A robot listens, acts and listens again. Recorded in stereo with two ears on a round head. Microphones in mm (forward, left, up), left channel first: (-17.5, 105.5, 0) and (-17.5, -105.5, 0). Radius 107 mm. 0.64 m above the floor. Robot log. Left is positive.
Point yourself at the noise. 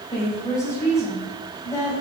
cmd yaw +30
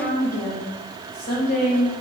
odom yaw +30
note: So it is at 135° left.
cmd yaw +135
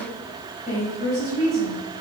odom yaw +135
note: The woman speaking is now 35° left.
cmd yaw +35
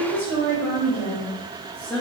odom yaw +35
note: The woman speaking is now 10° left.
cmd yaw +10
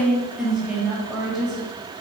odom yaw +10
end: Found it: a woman speaking, straight ahead, 2 to 4 m away.